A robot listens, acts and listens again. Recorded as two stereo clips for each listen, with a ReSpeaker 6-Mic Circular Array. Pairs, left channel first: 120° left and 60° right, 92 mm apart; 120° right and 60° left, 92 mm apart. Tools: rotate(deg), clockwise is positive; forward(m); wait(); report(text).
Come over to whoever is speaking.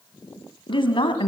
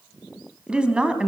rotate(-140)
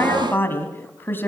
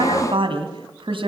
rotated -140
rotate(-55)
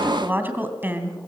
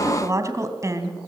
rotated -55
forward(1.0)
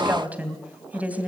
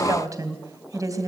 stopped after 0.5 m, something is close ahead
rotate(-15)
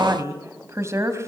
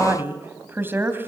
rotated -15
report("Blocked. The woman speaking is further on, straight ahead.")